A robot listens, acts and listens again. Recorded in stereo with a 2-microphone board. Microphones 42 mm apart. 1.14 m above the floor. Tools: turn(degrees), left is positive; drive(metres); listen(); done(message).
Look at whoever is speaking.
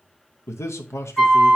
turn(degrees=90)
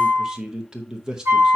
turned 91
turn(degrees=-15)
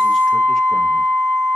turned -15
listen()
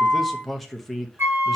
done("Found it: a man speaking, straight ahead, under 1 m away.")